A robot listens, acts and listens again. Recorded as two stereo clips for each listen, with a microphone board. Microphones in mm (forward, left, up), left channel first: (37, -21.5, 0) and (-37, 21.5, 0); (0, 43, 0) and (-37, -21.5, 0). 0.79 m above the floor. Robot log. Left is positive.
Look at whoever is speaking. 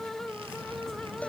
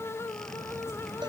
cmd idle
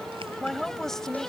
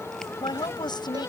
note: The woman speaking: 55° left.
cmd yaw +55
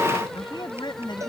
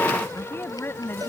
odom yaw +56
end: Found it: a woman speaking, straight ahead.